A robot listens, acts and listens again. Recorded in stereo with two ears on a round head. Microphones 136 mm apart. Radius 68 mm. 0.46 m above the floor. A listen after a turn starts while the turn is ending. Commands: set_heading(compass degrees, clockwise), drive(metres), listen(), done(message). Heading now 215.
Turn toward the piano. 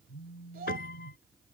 set_heading(150)
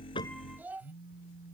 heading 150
listen()
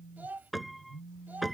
done("Found it: a piano, straight ahead.")